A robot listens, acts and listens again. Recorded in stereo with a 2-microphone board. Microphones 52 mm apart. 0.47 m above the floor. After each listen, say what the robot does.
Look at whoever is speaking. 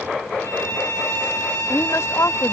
Turn 65° left.
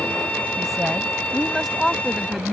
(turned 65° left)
Facing the woman speaking.